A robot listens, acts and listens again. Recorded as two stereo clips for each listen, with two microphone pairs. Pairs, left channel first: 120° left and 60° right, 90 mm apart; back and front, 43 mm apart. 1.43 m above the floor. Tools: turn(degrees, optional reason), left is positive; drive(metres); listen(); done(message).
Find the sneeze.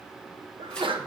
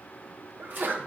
turn(degrees=-40, reason="The sneeze: 40° right.")
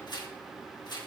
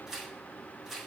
done("I heard a sneeze from this way, but can't make it out now.")